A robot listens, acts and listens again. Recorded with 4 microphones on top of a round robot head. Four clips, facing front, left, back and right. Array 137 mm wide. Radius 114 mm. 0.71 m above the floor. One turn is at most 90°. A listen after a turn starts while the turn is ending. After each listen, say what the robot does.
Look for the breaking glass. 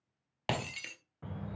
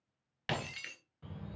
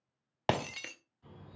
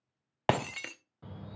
Turn 90° right.
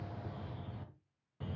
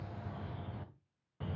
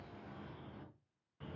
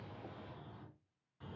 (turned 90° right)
Turn 25° right.
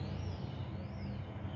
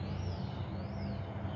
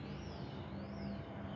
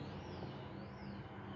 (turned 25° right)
Facing where the breaking glass came from. I can't hear it now.